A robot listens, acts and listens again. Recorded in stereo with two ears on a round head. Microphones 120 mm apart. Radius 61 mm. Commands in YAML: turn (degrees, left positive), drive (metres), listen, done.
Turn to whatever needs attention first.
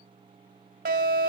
turn: -70
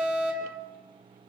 turn: -15
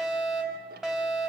done: "Facing the fire alarm."